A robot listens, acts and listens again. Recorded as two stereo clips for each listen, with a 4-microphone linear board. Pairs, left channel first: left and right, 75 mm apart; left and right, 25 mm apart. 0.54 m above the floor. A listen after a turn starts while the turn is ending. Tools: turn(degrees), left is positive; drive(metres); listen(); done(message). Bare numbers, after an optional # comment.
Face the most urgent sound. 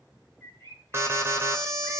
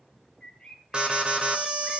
# The alarm: about 35° right or 145° right.
turn(-35)
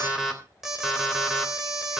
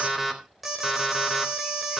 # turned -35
done("Found it: an alarm, straight ahead.")